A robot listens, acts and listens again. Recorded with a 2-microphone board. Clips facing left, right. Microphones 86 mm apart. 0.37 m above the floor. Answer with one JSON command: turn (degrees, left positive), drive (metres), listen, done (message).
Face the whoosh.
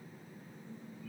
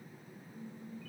{"listen": true}
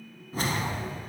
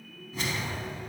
{"turn": 40}
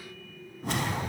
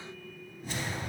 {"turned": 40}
{"turn": 95}
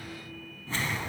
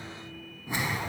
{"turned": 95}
{"turn": -15}
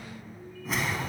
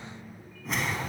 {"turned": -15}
{"done": "Found it: a whoosh, straight ahead."}